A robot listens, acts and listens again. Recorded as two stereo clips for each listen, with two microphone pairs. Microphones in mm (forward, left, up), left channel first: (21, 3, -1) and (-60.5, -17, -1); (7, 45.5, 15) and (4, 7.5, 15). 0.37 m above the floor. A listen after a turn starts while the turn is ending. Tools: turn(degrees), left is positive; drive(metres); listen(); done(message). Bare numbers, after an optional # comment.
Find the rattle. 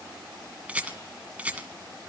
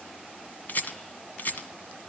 # The rattle: 120° left.
turn(120)
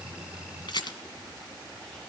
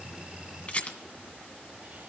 # The rattle is now 35° left.
turn(35)
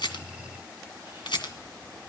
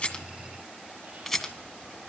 done("Found it: a rattle, straight ahead, 2 to 4 m away.")